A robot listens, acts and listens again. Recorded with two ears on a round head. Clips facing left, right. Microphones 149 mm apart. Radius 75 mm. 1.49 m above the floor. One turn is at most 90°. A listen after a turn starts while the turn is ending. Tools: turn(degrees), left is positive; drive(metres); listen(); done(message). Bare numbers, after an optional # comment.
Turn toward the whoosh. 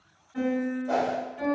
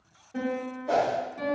# The whoosh: about 70° right or 110° right.
turn(-70)
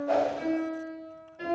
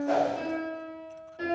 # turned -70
listen()
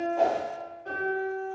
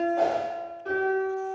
done("Found it: a whoosh, straight ahead, 1 to 2 m away.")